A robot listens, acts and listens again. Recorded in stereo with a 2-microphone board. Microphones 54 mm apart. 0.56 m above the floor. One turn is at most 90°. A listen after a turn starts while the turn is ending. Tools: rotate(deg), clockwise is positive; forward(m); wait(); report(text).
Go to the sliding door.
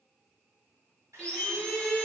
rotate(-30)
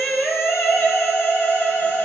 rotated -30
wait()
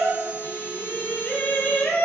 wait()
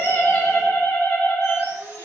report("I heard a sliding door, but can't make it out now. It was about straight ahead or 120° left. I did not reach it.")